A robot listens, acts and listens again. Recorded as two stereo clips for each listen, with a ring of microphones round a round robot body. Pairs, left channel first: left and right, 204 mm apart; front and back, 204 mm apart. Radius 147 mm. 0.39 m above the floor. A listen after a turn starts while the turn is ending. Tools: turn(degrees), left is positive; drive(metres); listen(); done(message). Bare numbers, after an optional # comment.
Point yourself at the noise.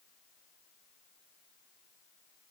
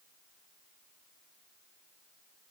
listen()
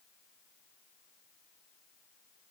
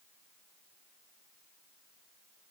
listen()
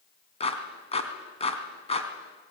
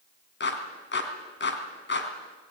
# The clap: 30° left.
turn(30)
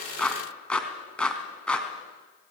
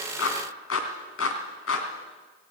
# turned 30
done("Found it: a clap, straight ahead.")